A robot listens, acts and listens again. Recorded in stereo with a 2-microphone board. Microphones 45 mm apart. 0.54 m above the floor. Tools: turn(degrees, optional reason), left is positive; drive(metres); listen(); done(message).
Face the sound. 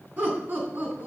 turn(degrees=-45, reason="The laughter: about 45° right or 135° right.")
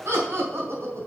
turn(degrees=-75, reason="So it is at 75° right.")
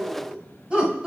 turn(degrees=-20, reason="The laughter is now 20° right.")
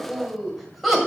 done("Found it: laughter, straight ahead, 2 to 4 m away.")